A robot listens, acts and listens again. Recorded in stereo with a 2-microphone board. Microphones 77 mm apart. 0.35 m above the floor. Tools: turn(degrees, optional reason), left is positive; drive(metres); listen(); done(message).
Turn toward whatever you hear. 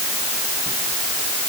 listen()
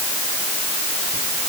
listen()
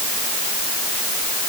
done("I can't make out anything to turn to.")